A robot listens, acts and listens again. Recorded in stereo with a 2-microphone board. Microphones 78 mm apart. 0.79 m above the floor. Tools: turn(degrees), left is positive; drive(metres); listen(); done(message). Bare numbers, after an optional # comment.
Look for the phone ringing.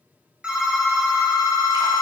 turn(-30)
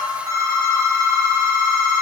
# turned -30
# So it is at 140° right.
turn(-140)
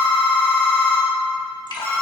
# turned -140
# The phone ringing is now 30° left.
turn(30)
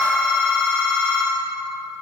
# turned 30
# The phone ringing is now 15° left.
turn(15)
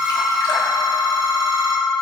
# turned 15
done("Found it: a phone ringing, straight ahead.")